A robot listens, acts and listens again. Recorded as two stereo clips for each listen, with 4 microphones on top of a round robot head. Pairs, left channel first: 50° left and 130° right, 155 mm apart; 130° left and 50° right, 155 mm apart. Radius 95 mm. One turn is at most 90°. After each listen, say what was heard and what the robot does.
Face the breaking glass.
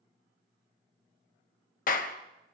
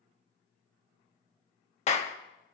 Keep listening.
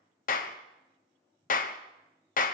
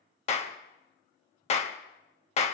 Keep listening.
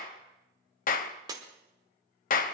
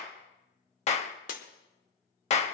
The breaking glass: 165° left. Turn 90° left.
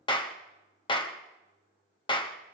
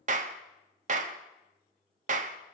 Nothing new. It was at 75° left. Turn 75° left.
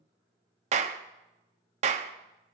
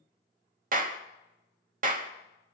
I heard breaking glass from this way, but can't make it out now.